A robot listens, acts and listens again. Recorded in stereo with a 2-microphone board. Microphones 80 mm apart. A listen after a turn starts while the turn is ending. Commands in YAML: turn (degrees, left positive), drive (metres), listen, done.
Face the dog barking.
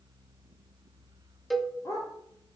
turn: 40
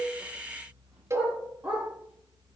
turn: -15
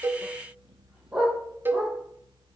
turn: -15
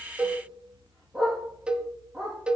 done: "Found it: a dog barking, straight ahead."